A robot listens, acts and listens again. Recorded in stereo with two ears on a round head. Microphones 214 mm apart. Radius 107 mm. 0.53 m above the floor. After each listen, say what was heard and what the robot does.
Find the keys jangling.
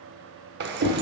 The keys jangling: about 45° right or 135° right. Turn 45° right.
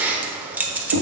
So it is at 10° right. Turn 10° right.
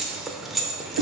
Facing the keys jangling.